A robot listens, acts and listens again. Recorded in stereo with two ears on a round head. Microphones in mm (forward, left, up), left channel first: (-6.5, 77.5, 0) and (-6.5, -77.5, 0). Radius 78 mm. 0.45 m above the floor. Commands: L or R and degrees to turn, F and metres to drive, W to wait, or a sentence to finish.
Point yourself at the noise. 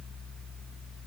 W
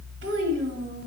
R75
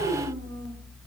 R20
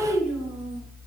Found it: a child speaking, straight ahead, 2 to 4 m away.